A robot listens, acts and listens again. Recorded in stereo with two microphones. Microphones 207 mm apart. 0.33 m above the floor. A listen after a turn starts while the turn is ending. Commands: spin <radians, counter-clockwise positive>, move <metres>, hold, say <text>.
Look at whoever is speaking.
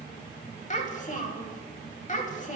spin 0.61
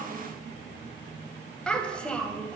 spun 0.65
say Facing the child speaking, under 1 m away.